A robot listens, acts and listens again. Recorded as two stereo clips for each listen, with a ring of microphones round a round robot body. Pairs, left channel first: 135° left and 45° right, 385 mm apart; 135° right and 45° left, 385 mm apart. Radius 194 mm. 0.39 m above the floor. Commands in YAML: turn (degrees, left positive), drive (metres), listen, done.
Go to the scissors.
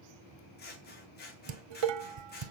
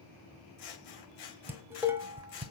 turn: -160
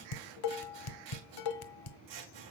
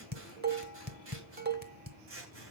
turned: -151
turn: -10
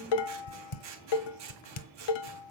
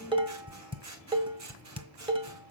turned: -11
drive: 1.0
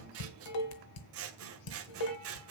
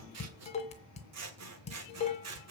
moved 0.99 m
drive: 1.0
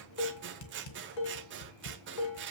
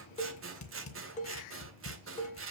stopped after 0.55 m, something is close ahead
done: "Arrived at the scissors, straight ahead."